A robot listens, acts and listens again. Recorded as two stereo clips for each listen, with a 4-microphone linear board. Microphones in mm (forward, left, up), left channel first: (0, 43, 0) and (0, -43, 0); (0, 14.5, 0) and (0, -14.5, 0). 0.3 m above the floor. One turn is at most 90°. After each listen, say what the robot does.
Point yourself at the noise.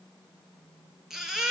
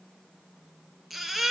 Turn 30° right.
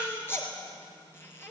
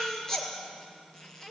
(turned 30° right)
Turn 30° left.
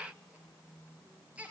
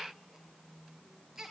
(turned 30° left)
Turn 15° right.
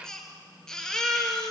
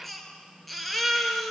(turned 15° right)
Turn 10° left.
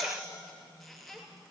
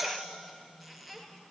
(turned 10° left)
Keep listening.
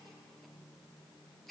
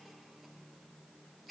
Keep listening.
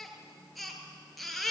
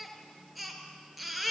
Facing the baby crying, 2 to 4 m away.